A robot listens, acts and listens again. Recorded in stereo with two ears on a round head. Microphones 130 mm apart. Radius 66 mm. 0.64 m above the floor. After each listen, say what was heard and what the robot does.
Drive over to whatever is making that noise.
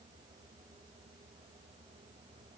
Keep listening.
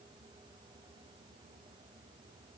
Keep listening.
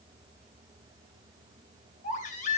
The baby crying: about 60° left or 120° left. Turn 60° left.
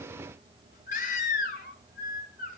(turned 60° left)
So it is at 60° left. Turn 60° left.
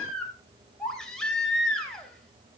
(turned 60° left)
Drive 1.0 m forward.
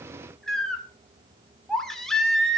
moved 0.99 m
Drive 1.0 m forward.
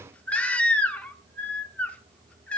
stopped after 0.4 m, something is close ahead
The baby crying is now 10° left. Turn 10° left.
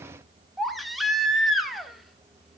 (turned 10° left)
Arrived at the baby crying, straight ahead.